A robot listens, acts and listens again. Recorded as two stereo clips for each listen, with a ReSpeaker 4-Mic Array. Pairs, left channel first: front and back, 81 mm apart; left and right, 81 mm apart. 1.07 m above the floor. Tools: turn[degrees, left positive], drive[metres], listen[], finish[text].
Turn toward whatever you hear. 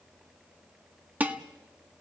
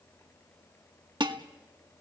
Thought: The dishes clattering: 110° right.
Action: turn[-110]
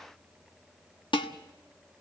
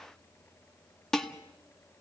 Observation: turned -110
Action: finish[Facing the dishes clattering.]